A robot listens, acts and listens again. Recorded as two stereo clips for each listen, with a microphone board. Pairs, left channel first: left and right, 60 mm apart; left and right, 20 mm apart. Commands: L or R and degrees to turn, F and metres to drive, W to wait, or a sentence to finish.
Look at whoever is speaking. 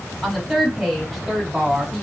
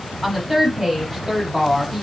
L30
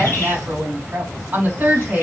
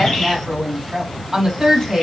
R25
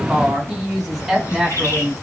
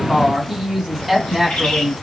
Found it: a woman speaking, straight ahead.